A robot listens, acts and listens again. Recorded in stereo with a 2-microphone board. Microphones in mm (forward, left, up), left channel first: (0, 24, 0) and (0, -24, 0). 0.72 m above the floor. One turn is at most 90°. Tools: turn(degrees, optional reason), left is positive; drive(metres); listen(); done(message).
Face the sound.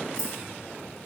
turn(degrees=25, reason="The keys jangling: about 25° left or 155° left.")
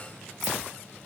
done("Facing the keys jangling, 1 to 2 m away.")